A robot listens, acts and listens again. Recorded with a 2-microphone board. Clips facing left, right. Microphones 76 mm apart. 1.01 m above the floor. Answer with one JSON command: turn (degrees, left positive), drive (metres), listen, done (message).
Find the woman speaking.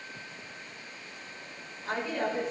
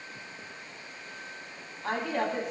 {"turn": -75}
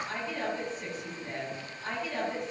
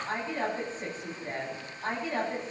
{"turn": -40}
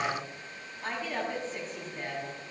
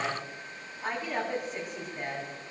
{"turn": -15}
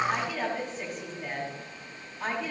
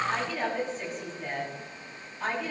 {"done": "Found it: a woman speaking, straight ahead, over 4 m away."}